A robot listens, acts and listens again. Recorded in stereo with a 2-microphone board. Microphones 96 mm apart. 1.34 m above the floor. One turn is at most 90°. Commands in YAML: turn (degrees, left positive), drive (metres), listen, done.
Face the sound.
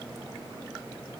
listen: true
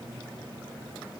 listen: true
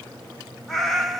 turn: 30
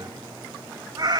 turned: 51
turn: -50
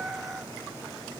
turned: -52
done: "Found it: a cat meowing, straight ahead."